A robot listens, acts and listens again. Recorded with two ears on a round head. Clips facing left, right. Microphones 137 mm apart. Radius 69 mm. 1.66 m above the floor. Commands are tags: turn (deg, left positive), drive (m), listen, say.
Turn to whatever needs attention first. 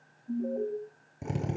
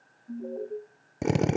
<turn deg="30"/>
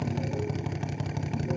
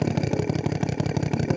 <listen/>
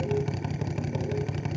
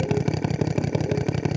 <listen/>
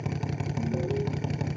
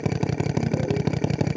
<say>I heard an alarm, but can't make it out now. It was about 15° right or 135° left.</say>